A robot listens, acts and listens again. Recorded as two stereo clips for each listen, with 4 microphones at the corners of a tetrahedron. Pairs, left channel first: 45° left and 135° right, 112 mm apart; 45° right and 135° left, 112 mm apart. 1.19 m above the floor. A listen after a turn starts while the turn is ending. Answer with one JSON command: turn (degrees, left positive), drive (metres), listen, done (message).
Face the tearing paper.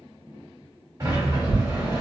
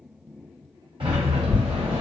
{"turn": -120}
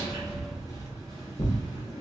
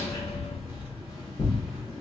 {"done": "Found it: tearing paper, straight ahead, under 1 m away."}